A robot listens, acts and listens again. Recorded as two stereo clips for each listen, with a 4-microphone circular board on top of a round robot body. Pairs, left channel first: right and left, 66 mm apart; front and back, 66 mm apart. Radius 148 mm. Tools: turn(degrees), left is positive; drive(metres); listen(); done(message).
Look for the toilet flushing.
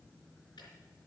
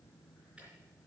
listen()
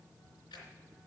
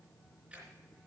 listen()
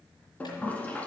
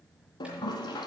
turn(degrees=-20)
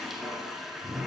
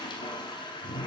done("Facing the toilet flushing.")